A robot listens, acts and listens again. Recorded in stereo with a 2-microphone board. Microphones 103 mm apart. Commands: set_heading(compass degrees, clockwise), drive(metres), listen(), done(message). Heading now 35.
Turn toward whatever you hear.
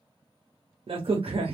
set_heading(100)
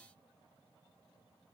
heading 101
listen()
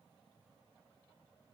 done("I heard a crack, but can't make it out now. It was about straight ahead or 50° right.")